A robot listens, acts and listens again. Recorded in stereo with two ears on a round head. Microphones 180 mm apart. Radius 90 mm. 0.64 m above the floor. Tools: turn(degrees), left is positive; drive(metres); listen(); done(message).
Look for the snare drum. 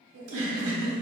listen()
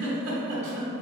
listen()
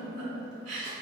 done("I can't make out a snare drum to turn to.")